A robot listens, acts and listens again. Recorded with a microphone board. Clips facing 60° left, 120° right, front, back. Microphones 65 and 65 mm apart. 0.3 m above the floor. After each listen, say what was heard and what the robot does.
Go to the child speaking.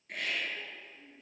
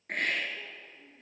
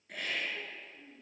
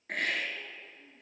The child speaking: 10° right. Turn 10° right.
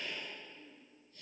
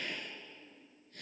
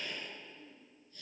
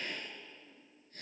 Drive 1.0 m forward.
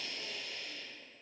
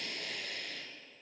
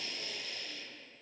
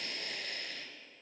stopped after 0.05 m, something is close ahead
Keep listening.
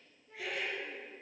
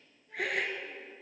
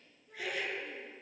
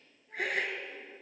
Keep listening.
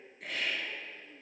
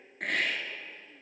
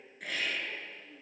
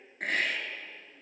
Blocked. The child speaking is further on, straight ahead.